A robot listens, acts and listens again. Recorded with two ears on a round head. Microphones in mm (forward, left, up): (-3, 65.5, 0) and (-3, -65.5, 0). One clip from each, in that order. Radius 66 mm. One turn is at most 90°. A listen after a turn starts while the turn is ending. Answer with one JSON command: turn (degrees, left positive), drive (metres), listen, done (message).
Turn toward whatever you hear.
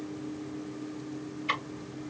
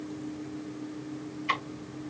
{"turn": 30}
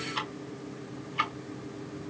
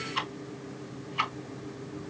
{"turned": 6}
{"turn": -30}
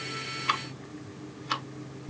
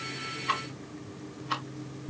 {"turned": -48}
{"turn": 40}
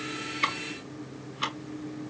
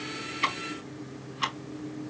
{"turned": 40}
{"done": "Facing the ticking."}